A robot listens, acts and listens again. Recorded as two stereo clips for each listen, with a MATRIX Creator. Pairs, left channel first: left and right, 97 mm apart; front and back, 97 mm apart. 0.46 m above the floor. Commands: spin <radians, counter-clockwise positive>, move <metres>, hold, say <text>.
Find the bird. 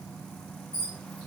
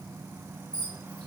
spin 1.31
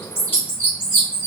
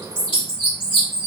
spin 0.35
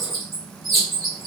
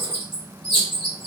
say Facing the bird.